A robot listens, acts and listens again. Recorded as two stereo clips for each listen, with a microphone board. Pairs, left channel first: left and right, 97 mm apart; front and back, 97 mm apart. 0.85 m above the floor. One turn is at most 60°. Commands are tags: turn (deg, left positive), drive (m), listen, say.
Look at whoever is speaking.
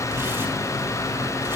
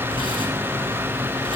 <listen/>
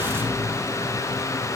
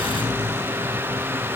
<listen/>
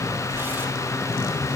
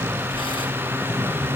<say>I can't make out anyone speaking.</say>